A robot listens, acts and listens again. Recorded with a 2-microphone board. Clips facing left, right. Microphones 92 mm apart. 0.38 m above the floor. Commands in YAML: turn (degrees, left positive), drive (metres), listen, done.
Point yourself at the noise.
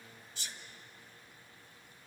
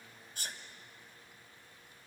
turn: -50
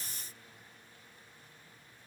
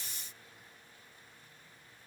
listen: true
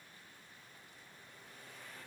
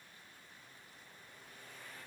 done: "I heard a sneeze, but can't make it out now. It was about straight ahead or 80° right."